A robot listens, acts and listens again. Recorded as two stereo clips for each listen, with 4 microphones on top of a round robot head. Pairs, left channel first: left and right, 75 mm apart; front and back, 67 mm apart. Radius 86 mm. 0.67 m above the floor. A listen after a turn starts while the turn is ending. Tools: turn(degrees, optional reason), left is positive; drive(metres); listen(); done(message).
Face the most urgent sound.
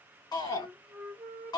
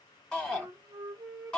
turn(degrees=75, reason="The shout: 75° left.")
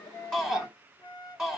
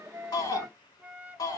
done("Found it: a shout, straight ahead.")